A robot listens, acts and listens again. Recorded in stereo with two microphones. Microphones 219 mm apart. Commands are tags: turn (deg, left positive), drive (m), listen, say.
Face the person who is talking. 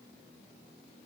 <listen/>
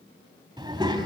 <turn deg="-20"/>
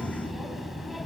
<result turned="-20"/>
<say>Found it: a child speaking, straight ahead, 1 to 2 m away.</say>